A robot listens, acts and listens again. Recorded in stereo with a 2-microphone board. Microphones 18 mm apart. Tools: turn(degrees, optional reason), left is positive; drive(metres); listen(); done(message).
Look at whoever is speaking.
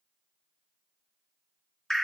listen()
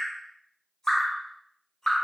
listen()
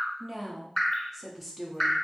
turn(degrees=-30)
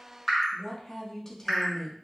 turn(degrees=25, reason="So it is at 25° left.")
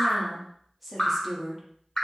done("Found it: a woman speaking, straight ahead, under 1 m away.")